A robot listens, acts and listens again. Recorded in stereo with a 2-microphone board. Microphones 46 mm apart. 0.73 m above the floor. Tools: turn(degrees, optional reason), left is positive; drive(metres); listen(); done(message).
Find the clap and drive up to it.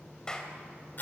turn(degrees=15, reason="The clap: about 15° left or 165° left.")
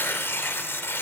listen()
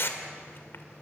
listen()
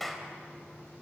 drive(metres=1.0)
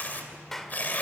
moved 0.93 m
drive(metres=1.0)
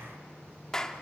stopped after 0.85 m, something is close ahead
turn(degrees=15, reason="The clap is now 15° left.")
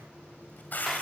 listen()
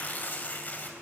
listen()
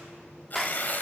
done("I am next to the clap.")